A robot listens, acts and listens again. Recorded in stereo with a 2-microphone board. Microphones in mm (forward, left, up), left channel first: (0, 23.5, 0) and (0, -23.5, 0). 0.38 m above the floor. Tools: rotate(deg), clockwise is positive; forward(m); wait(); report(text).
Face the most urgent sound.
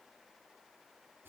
wait()
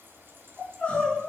rotate(-20)
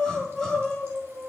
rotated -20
report("Found it: crying, straight ahead.")